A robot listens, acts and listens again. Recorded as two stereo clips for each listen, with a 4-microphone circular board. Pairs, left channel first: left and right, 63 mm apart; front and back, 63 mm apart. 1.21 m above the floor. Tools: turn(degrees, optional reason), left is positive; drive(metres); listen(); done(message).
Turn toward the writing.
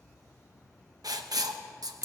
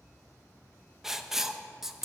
turn(degrees=-100, reason="The writing: 100° right.")
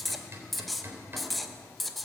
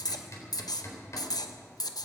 done("Facing the writing.")